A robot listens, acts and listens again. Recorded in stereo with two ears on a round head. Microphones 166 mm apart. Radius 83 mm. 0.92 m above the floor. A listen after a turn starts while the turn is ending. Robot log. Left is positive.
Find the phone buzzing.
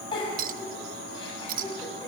cmd idle
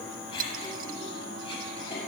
cmd idle
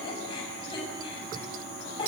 end: I can't make out a phone buzzing, only a clink and a giggle.